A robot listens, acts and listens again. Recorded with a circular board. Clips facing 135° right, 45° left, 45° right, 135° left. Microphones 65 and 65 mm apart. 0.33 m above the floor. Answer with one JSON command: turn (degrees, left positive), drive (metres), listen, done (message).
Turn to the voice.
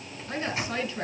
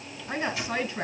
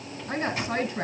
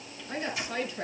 {"turn": -20}
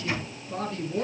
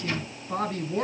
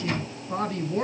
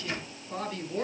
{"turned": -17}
{"done": "Facing the woman speaking, over 4 m away."}